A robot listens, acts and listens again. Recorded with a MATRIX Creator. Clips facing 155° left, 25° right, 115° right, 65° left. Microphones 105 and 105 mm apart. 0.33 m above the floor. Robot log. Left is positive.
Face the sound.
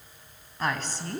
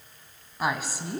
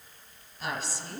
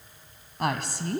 note: The woman speaking: 55° left.
cmd yaw +55
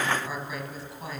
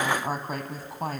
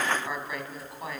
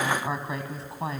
note: The woman speaking is now 10° left.
cmd yaw +10
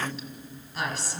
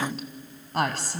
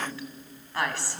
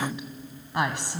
end: Facing the woman speaking.